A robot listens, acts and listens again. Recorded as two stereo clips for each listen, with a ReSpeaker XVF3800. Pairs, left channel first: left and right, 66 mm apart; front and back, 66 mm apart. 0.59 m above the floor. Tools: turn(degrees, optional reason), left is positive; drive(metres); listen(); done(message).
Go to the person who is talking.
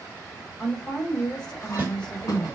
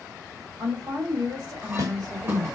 turn(degrees=160, reason="The woman speaking: 160° left.")
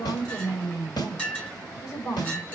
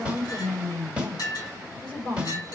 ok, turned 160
turn(degrees=60, reason="The woman speaking is now 60° left.")
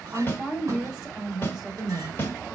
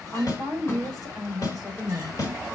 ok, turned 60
turn(degrees=-15, reason="The woman speaking is now 15° right.")
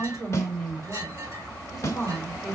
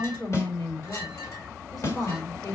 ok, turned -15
drive(metres=1.0)
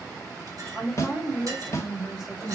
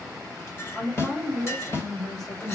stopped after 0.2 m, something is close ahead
turn(degrees=-10, reason="The woman speaking is now 10° right.")
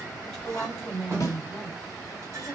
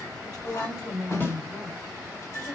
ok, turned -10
done("Blocked. The woman speaking is further on, straight ahead.")